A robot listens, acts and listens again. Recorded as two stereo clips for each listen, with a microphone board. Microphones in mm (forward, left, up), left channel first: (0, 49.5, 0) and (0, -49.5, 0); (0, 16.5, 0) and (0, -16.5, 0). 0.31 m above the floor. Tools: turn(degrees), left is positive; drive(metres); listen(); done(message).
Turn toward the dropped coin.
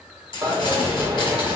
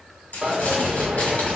turn(degrees=-40)
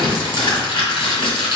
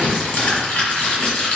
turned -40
listen()
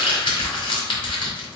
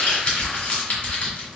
done("I heard a dropped coin, but can't make it out now. It was about straight ahead or 100° right.")